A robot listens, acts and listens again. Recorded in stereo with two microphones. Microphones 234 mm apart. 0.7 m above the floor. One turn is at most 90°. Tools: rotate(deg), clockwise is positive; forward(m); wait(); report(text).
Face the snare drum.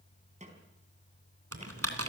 rotate(30)
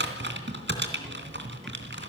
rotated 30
wait()
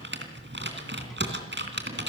wait()
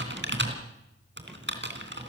report("I heard a snare drum, but can't make it out now. It was about straight ahead or 120° right.")